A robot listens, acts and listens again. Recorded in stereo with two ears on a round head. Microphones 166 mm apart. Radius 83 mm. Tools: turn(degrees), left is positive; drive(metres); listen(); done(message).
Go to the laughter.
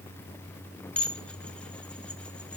listen()
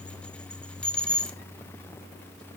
listen()
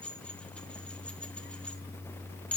done("I can't make out laughter, only dishes clattering.")